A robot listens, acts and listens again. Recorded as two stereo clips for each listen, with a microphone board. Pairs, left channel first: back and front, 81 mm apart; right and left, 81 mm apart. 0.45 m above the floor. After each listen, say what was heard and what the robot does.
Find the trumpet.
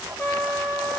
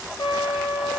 The trumpet: 115° right. Turn 115° right.
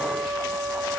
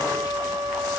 The trumpet is now 15° right. Turn 15° right.
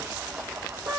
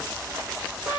Found it: a trumpet, straight ahead, 2 to 4 m away.